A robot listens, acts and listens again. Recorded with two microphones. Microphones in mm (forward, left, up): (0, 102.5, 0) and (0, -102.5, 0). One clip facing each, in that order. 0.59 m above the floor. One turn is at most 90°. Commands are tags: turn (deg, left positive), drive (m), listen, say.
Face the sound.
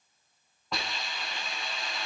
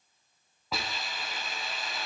<turn deg="-30"/>
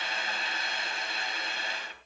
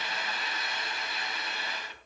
<turn deg="30"/>
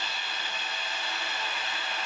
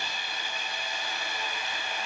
<turn deg="-10"/>
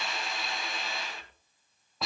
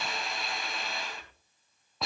<say>Found it: a hiss, straight ahead.</say>